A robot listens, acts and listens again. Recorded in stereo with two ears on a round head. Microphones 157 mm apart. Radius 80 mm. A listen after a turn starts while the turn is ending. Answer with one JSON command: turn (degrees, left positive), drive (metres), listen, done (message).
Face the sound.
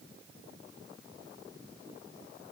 {"listen": true}
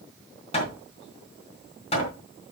{"turn": 35}
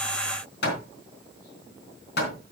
{"turn": 110}
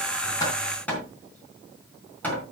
{"turn": 10}
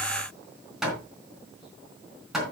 {"done": "Found it: hammering, straight ahead, 2 to 4 m away."}